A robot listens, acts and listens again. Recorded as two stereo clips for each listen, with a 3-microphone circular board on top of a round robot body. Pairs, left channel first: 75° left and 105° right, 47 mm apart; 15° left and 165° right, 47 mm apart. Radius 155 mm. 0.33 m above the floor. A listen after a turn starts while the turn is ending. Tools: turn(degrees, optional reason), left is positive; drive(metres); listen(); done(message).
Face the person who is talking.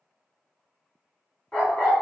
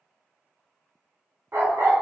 listen()
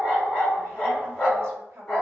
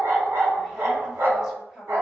turn(degrees=-85, reason="The woman speaking: 85° right.")
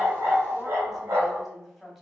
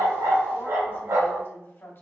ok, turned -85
turn(degrees=-15, reason="The woman speaking is now 15° right.")
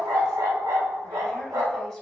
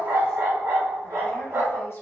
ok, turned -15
done("Facing the woman speaking.")